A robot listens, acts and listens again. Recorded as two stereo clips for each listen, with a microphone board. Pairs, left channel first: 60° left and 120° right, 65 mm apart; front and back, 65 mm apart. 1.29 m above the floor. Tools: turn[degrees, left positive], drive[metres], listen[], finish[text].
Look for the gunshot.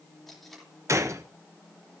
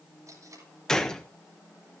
Thought: The gunshot: 80° right.
Action: turn[-80]
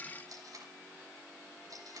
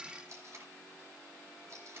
Action: finish[I heard a gunshot from this way, but can't make it out now.]